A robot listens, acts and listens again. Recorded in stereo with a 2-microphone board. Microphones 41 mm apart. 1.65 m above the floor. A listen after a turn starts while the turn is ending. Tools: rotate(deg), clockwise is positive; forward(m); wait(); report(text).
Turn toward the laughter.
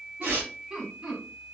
rotate(15)
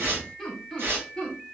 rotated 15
rotate(-15)
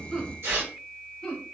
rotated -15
rotate(-20)
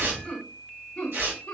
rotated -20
rotate(-25)
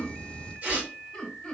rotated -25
rotate(-10)
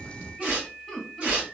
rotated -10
report("Found it: laughter, straight ahead, 1 to 2 m away.")